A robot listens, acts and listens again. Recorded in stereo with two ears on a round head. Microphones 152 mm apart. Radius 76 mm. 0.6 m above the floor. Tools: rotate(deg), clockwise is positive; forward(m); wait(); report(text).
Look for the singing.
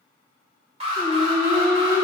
rotate(20)
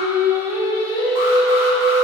rotate(35)
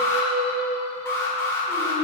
rotate(25)
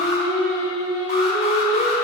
report("Found it: singing, straight ahead, 2 to 4 m away.")